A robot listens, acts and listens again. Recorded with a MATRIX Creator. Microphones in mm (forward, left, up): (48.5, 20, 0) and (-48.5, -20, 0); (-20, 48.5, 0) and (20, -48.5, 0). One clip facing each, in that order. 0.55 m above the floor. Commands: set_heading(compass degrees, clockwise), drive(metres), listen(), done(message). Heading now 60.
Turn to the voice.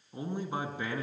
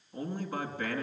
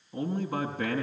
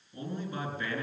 set_heading(325)
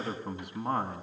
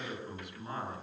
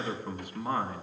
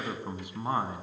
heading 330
done("Facing the man speaking, 2 to 4 m away.")